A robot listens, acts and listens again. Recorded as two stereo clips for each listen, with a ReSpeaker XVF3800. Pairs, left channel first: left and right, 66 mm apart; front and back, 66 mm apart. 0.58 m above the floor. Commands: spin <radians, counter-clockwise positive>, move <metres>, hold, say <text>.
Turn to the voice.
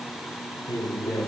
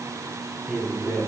spin 1.92
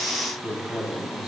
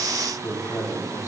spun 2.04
say Found it: a man speaking, straight ahead.